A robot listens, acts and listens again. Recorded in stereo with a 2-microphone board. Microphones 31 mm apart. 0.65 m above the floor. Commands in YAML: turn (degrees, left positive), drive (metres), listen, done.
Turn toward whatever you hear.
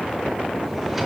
turn: -30
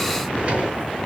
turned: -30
turn: -140
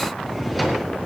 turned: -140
done: "Facing the drawer."